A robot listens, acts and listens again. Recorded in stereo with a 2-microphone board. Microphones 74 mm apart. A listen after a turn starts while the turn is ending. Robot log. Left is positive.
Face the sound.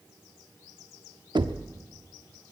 cmd yaw -90
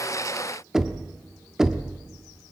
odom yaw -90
end: Facing the knocking.